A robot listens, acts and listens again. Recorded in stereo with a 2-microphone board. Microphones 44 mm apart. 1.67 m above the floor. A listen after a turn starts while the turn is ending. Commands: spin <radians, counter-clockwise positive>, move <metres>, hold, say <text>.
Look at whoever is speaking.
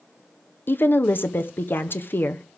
spin 0.96
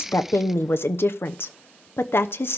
spin 1.22
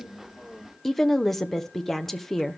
say Facing the woman speaking, under 1 m away.